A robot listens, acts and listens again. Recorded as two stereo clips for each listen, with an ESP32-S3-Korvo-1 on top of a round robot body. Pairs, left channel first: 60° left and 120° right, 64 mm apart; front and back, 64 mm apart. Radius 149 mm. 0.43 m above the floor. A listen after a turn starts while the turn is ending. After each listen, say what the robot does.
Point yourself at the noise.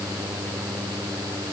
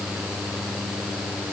Keep listening.
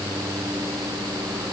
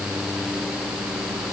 Keep listening.
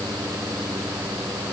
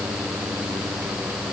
I can't make out anything to turn to.